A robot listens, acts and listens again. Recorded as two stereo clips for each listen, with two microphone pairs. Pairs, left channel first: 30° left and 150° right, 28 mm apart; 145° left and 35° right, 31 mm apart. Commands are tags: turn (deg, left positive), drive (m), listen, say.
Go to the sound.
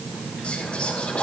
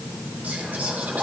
<turn deg="-10"/>
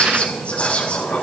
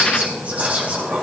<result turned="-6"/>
<drive m="1.0"/>
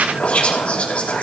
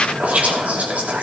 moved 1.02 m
<drive m="1.0"/>
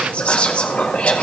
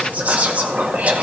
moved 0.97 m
<drive m="1.0"/>
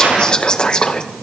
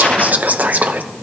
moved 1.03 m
<turn deg="-25"/>
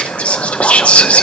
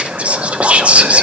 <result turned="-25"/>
<drive m="1.0"/>
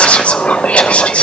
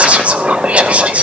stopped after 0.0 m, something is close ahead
<say>I am next to the whispering.</say>